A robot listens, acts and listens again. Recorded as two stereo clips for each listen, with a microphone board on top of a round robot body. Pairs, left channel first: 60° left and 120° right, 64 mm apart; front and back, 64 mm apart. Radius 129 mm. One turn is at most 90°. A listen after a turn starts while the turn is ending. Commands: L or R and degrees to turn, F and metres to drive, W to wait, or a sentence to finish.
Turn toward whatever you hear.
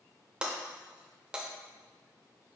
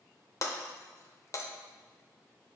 R45
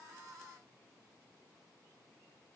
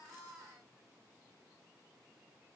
I heard breaking glass from this way, but can't make it out now.